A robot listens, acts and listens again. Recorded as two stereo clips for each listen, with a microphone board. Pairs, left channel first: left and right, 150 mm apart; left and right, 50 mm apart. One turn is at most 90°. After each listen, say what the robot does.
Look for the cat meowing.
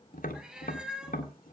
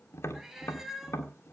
Turn 30° right.
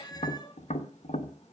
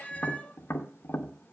Turn 25° left.
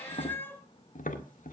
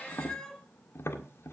Turn 15° left.
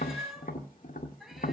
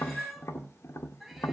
Found it: a cat meowing, straight ahead, 1 to 2 m away.